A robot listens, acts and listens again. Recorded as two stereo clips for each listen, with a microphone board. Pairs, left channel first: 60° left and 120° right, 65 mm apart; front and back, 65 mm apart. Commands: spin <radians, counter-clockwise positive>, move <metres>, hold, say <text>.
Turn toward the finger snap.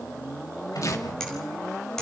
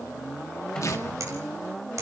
hold
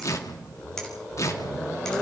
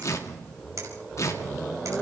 spin 2.44
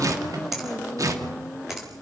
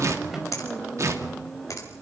spin -0.61
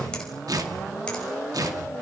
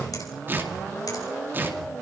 hold
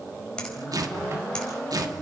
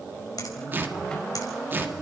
spin -0.26
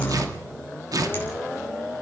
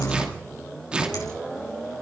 hold
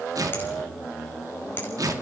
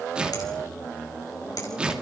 hold
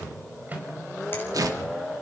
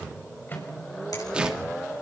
say Facing where the finger snap came from. I can't hear it now.